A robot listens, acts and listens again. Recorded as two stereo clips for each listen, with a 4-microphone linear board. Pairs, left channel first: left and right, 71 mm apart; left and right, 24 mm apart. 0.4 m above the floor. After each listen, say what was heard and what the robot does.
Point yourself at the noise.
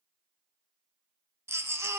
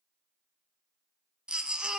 The baby crying: about 40° right or 140° right. Turn 40° right.
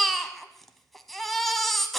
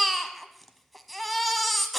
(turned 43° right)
Facing the baby crying.